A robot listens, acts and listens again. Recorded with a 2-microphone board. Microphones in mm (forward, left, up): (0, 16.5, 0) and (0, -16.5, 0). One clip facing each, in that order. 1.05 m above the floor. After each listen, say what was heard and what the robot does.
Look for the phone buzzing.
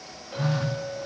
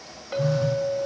The phone buzzing: about 55° left or 125° left. Turn 55° left.
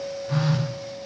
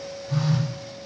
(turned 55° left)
So it is at 60° left. Turn 60° left.
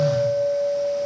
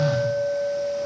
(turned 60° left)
Keep listening.
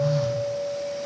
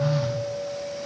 The phone buzzing is now 20° right. Turn 20° right.
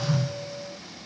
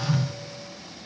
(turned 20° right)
Facing the phone buzzing, under 1 m away.